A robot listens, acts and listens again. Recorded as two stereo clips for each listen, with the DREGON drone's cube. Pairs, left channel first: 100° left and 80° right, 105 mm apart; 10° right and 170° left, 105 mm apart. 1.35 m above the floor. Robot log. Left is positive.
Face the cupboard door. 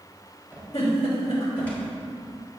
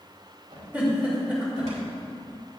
note: The cupboard door: straight behind.
cmd yaw +180
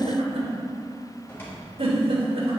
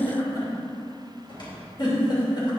note: The cupboard door is now 30° left.
cmd yaw +30
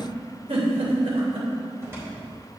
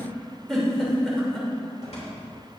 note: The cupboard door is now 15° right.
cmd yaw -15
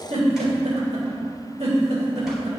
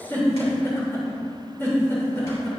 cmd idle
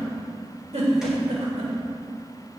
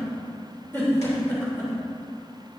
cmd idle
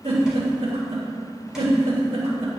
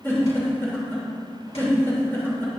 end: I heard a cupboard door from this way, but can't make it out now.